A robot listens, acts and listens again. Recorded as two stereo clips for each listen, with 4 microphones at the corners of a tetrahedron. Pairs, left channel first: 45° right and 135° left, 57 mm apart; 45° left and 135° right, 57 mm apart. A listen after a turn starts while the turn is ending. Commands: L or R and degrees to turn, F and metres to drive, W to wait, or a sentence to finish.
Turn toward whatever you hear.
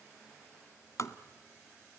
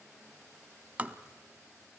R75
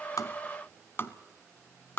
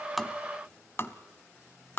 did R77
Found it: tapping, straight ahead.